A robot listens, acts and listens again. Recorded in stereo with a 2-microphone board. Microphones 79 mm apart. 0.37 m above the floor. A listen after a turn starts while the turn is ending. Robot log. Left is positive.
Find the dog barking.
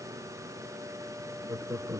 cmd idle
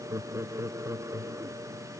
cmd idle
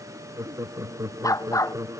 note: The dog barking: about 45° left or 135° left.
cmd yaw +45
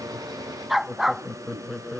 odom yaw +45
end: Facing the dog barking.